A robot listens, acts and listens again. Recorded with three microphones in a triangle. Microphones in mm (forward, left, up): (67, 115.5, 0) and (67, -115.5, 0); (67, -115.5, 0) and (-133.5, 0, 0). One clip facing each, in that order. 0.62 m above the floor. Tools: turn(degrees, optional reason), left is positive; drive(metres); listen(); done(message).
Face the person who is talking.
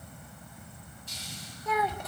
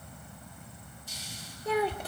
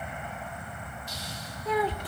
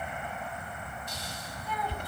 turn(degrees=-30, reason="The child speaking: 30° right.")
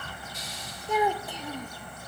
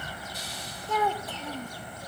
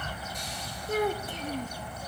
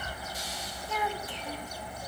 turn(degrees=15, reason="The child speaking is now 15° left.")
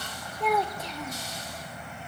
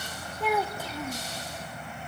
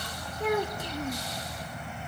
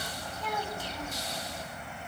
done("Found it: a child speaking, straight ahead, under 1 m away.")